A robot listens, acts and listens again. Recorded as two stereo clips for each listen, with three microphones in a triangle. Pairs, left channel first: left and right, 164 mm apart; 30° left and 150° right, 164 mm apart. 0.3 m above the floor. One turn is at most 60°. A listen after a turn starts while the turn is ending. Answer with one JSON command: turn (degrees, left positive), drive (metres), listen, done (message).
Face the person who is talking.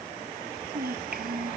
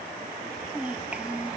{"turn": -60}
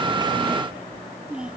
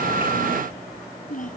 {"done": "Found it: a child speaking, straight ahead."}